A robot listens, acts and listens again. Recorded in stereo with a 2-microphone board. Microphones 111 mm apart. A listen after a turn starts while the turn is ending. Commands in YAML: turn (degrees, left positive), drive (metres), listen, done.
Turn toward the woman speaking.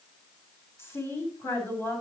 turn: 25
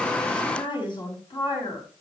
turn: 130
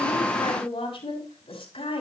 turn: 60
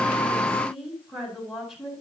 done: "Facing the woman speaking, over 4 m away."